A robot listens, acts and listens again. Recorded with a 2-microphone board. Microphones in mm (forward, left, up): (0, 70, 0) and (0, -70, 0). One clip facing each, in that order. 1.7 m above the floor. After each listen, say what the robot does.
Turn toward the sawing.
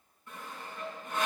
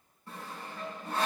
Turn 35° right.
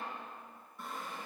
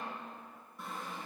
Found it: sawing, straight ahead, over 4 m away.